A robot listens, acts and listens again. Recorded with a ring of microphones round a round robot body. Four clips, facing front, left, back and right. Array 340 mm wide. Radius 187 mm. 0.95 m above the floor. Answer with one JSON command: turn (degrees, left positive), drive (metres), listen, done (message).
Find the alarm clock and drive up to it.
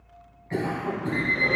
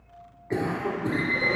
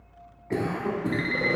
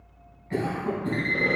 {"turn": 180}
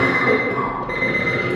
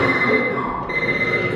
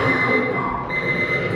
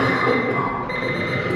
{"turn": -15}
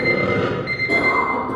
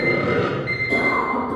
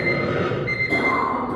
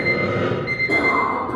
{"drive": 1.0}
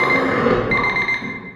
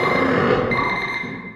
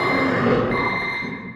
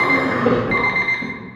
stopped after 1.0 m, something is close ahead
{"done": "I am next to the alarm clock."}